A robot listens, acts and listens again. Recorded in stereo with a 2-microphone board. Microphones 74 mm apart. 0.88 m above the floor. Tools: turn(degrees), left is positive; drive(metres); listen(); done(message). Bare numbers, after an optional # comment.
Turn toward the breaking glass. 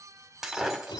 turn(-30)
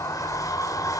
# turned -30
listen()
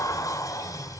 done("I heard breaking glass, but can't make it out now. It was about 25° left or 145° right.")